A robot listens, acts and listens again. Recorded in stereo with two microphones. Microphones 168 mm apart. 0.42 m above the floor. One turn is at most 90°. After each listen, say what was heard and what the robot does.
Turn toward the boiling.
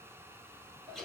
Keep listening.
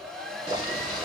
The boiling: about 30° right or 150° right. Turn 30° right.
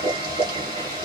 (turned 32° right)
So it is at 120° right. Turn 90° right.
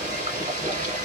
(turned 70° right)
The boiling is now 50° right. Turn 50° right.
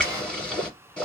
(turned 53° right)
Facing the boiling.